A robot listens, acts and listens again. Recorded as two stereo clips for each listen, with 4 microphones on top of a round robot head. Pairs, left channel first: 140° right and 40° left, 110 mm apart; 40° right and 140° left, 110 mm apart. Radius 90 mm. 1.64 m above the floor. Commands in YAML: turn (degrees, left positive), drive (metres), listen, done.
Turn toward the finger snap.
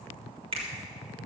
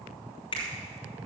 done: "Found it: a finger snap, straight ahead, 2 to 4 m away."